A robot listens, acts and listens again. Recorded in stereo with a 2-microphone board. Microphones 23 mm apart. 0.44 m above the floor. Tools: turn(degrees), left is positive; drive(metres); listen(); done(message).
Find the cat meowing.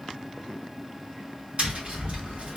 listen()
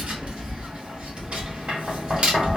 listen()
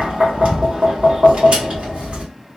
done("I can't make out a cat meowing, only tapping.")